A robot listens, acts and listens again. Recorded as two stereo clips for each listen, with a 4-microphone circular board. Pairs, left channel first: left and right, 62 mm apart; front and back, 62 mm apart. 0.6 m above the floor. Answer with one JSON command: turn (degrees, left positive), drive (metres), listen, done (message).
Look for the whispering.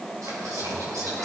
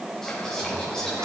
{"turn": -75}
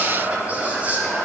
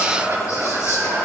{"listen": true}
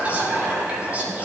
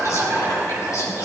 {"turn": -25}
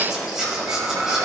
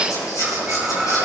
{"turn": -10}
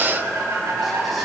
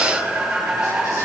{"listen": true}
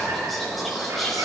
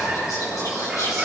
{"done": "Facing the whispering."}